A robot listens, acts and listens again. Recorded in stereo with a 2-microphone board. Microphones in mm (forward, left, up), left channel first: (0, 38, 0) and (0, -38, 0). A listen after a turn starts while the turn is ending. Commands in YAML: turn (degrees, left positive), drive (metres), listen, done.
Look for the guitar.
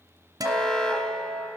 turn: -55
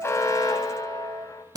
turn: -65
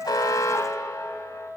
done: "Facing the guitar, 1 to 2 m away."